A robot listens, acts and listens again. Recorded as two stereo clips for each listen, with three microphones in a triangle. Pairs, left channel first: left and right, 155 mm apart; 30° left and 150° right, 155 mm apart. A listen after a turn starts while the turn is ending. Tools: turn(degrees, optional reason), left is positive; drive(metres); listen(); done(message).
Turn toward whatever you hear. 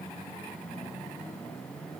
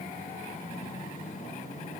listen()
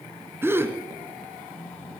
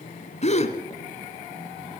turn(degrees=-15, reason="The gasp: 15° right.")
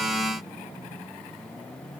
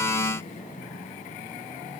done("Facing where the gasp came from. I can't hear it now.")